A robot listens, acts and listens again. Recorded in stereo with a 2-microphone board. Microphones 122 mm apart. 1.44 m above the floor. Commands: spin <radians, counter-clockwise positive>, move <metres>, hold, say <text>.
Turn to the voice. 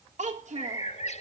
spin -1.57
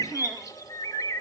hold
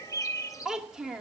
say Found it: a child speaking, straight ahead, 2 to 4 m away.